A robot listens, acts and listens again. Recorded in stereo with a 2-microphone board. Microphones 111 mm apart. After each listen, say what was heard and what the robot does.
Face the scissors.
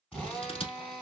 The scissors: about 60° left or 120° left. Turn 60° left.
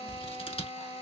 So it is at 60° left. Turn 60° left.
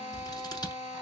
The scissors is now 40° left. Turn 40° left.
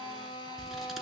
Keep listening.
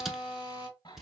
Facing the scissors.